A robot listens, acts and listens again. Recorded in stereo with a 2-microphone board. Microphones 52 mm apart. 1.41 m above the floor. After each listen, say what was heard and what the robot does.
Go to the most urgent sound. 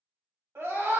The scream: about 60° right or 120° right. Turn 60° right.
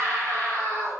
So it is at 65° right. Turn 65° right.
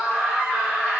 Drive 1.0 m forward.
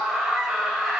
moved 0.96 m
Drive 1.0 m forward.
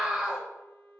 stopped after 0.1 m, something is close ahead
Arrived at the scream, straight ahead.